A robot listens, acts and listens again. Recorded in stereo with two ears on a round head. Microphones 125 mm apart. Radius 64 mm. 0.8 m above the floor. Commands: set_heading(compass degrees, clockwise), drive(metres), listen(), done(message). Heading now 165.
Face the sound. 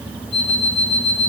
set_heading(120)
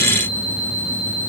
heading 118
set_heading(28)
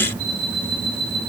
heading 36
set_heading(26)
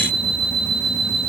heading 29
done("Facing the alarm clock.")